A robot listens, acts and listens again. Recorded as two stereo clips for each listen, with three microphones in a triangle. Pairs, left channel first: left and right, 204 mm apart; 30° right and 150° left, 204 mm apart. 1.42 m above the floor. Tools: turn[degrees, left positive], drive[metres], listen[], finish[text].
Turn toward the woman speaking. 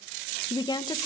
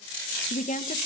Thought: The woman speaking: 20° left.
Action: turn[20]
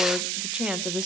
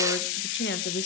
Action: finish[Facing the woman speaking.]